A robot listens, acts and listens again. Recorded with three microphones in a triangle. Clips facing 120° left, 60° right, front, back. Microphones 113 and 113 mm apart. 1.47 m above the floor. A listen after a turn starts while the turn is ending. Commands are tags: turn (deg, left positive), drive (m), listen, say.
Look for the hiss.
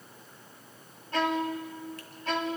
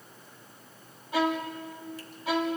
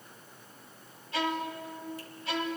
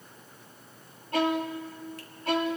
<listen/>
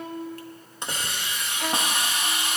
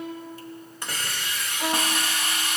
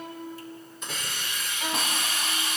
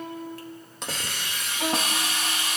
<turn deg="-170"/>
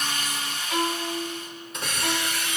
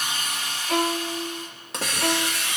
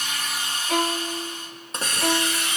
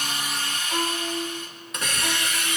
<turn deg="-55"/>
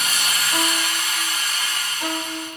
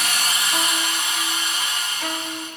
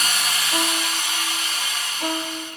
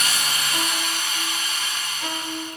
<say>Found it: a hiss, straight ahead, 2 to 4 m away.</say>